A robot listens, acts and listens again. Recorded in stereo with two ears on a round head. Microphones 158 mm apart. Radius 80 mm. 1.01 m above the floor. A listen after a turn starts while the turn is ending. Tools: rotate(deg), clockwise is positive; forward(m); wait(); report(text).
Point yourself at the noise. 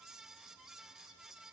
wait()
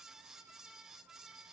wait()
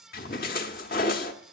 rotate(-55)
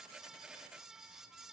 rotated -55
wait()
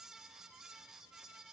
report("I heard a splash, but can't make it out now. It was about straight ahead or 70° left.")